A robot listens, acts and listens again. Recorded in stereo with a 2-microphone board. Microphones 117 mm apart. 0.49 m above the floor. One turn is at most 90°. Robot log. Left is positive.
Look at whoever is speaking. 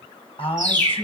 note: The man speaking: about 50° left or 130° left.
cmd yaw +50
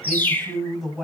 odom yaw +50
end: Facing the man speaking, 2 to 4 m away.